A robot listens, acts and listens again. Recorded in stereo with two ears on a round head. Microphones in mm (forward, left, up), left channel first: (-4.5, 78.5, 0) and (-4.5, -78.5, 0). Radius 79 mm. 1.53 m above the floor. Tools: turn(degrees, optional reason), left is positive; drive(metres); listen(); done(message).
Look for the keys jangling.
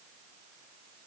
listen()
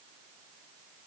listen()
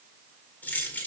turn(degrees=30)
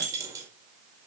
turn(degrees=-20, reason="So it is at 20° right.")
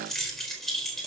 done("Facing the keys jangling, over 4 m away.")